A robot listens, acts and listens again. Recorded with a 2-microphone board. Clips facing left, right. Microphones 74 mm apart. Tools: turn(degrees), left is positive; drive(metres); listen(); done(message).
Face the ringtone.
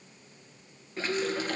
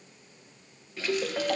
turn(degrees=-65)
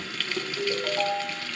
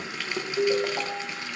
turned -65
turn(degrees=-30)
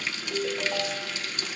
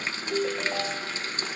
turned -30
turn(degrees=-10)
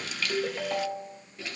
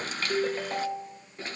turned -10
done("Found it: a ringtone, straight ahead, 1 to 2 m away.")